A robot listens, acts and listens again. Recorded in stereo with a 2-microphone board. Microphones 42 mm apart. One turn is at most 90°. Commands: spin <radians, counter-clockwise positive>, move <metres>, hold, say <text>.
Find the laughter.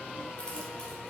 hold
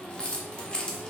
hold
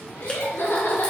spin 1.31
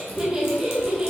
spin -0.35
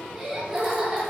say Facing the laughter, 2 to 4 m away.